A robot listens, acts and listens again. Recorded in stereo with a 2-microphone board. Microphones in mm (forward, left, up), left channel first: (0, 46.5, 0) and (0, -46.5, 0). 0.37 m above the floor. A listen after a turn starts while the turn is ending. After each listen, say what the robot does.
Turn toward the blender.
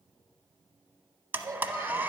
Turn 20° right.
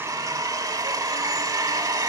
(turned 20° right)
Turn 140° right.
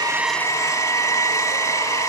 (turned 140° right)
Turn 35° left.
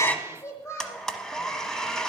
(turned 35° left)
Found it: a blender, straight ahead, under 1 m away.